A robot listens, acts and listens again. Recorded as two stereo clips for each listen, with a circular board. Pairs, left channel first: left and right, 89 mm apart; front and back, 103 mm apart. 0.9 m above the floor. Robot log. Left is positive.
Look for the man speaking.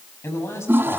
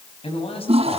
note: The man speaking: 30° left.
cmd yaw +30
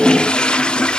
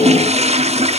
cmd idle
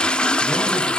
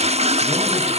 cmd idle
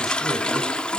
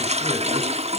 end: Facing where the man speaking came from. I can't hear it now.